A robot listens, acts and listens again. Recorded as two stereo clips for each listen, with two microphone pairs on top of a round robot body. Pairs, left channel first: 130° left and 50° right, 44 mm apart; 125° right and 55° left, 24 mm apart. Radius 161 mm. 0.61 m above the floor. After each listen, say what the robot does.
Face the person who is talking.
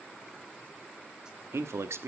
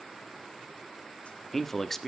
Turn 45° right.
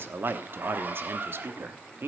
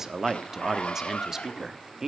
Turn 15° right.
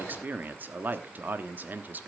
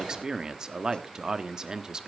Found it: a man speaking, straight ahead, 1 to 2 m away.